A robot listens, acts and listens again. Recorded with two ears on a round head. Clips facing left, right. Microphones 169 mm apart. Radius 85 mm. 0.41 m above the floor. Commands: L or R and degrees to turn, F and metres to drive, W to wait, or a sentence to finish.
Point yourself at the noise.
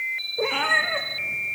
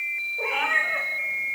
L45
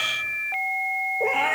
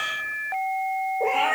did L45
Found it: a cat meowing, straight ahead.